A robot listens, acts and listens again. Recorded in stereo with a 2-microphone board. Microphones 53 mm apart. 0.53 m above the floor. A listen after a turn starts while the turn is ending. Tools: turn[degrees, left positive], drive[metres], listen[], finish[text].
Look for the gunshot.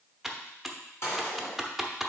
Thought: The gunshot: about 50° left or 130° left.
Action: turn[50]
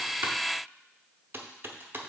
Action: listen[]
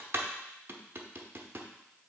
Action: finish[I heard a gunshot, but can't make it out now. It was about straight ahead or 80° left.]